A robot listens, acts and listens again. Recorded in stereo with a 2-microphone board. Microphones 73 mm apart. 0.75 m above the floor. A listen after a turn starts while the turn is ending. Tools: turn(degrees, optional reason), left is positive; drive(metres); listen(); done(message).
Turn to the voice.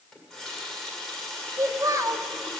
turn(degrees=-45, reason="The child speaking: about 45° right or 135° right.")
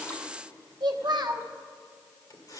turn(degrees=-85, reason="So it is at 85° right.")
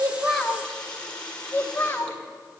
turn(degrees=30, reason="The child speaking is now 30° left.")
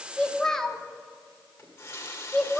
done("Found it: a child speaking, straight ahead.")